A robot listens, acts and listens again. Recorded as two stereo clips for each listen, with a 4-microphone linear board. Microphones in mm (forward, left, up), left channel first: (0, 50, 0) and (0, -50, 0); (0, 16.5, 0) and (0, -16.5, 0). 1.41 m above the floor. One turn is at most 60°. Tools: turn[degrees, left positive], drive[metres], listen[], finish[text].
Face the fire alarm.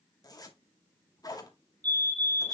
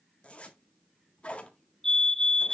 Thought: The fire alarm: about 15° left or 165° left.
Action: turn[15]
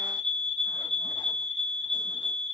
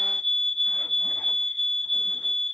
Action: finish[Found it: a fire alarm, straight ahead.]